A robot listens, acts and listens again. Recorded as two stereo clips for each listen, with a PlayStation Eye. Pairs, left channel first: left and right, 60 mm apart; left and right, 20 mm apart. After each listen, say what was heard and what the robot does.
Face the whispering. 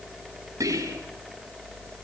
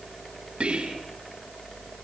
The whispering: about 65° right or 115° right. Turn 65° right.
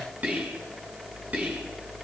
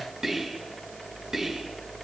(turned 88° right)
So it is at 25° right. Turn 25° right.
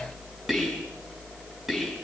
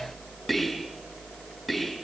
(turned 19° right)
Facing the whispering.